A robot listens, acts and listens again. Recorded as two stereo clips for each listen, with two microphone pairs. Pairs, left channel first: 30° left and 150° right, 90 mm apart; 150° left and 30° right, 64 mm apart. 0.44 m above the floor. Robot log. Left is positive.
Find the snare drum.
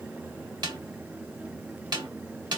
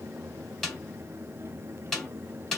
note: The snare drum: 130° right.
cmd yaw -130
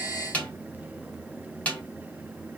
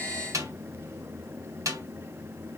note: The snare drum is now 40° right.
cmd yaw -40
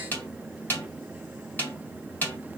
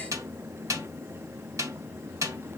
note: The snare drum is now 30° right.
cmd yaw -30
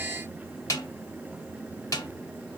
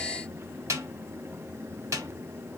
note: The snare drum is now 15° right.
cmd yaw -15
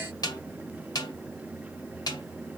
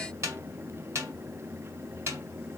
end: Facing the snare drum, 1 to 2 m away.